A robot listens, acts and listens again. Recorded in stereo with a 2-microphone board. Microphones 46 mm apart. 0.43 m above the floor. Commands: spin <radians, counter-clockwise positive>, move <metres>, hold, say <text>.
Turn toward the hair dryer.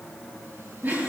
hold
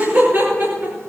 hold
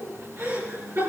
say I can't make out a hair dryer to turn to.